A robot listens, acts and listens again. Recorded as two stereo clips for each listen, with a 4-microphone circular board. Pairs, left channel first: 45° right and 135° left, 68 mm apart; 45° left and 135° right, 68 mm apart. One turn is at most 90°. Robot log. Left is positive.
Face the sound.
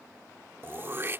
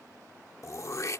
note: The throat clearing: 80° left.
cmd yaw +80
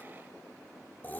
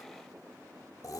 note: The throat clearing is now 20° left.
cmd yaw +20
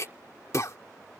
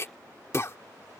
end: Found it: throat clearing, straight ahead.